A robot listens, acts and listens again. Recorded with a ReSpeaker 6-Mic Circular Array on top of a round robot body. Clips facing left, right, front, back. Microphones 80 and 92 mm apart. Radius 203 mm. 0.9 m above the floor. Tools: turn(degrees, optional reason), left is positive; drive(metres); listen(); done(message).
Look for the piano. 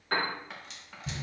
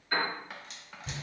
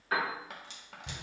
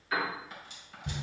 turn(degrees=50, reason="The piano: 50° left.")
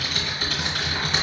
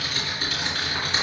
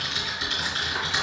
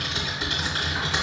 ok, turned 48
listen()
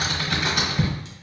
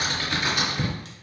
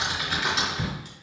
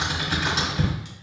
listen()
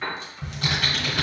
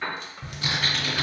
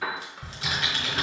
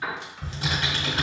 done("Found it: a piano, straight ahead, 1 to 2 m away.")